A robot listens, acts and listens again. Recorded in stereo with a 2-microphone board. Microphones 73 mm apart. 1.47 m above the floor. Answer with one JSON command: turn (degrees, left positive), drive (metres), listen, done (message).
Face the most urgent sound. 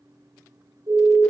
{"turn": -70}
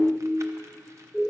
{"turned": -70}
{"turn": -10}
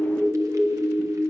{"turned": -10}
{"done": "Found it: a siren, straight ahead."}